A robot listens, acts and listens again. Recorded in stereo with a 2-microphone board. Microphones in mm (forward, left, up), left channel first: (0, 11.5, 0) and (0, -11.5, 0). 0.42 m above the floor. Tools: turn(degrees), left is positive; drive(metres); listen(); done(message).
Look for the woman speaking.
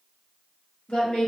turn(degrees=50)
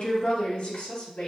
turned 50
turn(degrees=65)
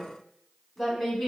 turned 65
turn(degrees=10)
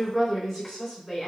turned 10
done("Facing the woman speaking, 2 to 4 m away.")